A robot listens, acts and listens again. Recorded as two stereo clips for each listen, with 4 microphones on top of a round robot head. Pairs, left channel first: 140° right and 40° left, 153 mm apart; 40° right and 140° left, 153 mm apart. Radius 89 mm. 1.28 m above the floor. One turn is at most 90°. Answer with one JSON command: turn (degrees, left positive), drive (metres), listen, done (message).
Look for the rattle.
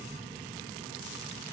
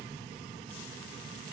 {"listen": true}
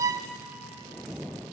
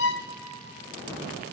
{"listen": true}
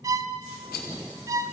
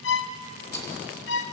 {"turn": -90}
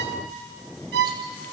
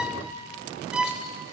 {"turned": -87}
{"turn": -25}
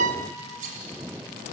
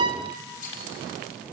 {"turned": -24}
{"done": "Found it: a rattle, straight ahead, 2 to 4 m away."}